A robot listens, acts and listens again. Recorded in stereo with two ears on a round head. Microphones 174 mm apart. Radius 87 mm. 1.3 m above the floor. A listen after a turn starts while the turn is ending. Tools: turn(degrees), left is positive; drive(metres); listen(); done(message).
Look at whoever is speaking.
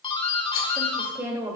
turn(degrees=-15)
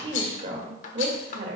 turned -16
turn(degrees=-125)
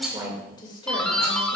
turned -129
turn(degrees=25)
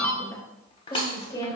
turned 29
turn(degrees=25)
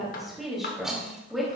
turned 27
done("Facing the woman speaking.")